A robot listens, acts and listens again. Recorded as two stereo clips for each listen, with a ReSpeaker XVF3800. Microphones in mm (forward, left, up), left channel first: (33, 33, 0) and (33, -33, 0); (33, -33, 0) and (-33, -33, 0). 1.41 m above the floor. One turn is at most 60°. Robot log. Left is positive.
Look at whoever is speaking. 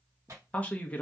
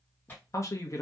note: The man speaking: 25° left.
cmd yaw +25
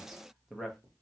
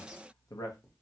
end: Facing the man speaking.